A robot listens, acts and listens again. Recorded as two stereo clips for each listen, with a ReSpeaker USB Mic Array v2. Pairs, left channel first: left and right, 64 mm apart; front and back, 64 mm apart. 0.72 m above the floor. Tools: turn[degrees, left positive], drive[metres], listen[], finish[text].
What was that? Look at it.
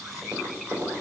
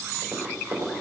Thought: The tapping: 135° right.
Action: turn[-135]
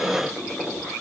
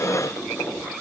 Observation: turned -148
Thought: The tapping is now 10° left.
Action: turn[10]
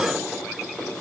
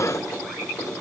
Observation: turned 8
Action: finish[Facing the tapping, 2 to 4 m away.]